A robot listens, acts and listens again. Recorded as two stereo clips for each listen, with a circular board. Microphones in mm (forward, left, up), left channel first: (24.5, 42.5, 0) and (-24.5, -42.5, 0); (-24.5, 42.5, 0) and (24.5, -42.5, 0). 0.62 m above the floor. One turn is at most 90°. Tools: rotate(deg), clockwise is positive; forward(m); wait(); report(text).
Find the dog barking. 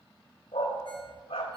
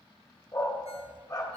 rotate(-65)
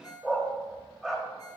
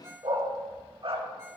rotate(25)
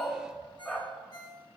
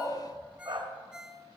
rotate(15)
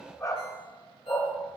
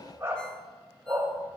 report("Facing the dog barking, 1 to 2 m away.")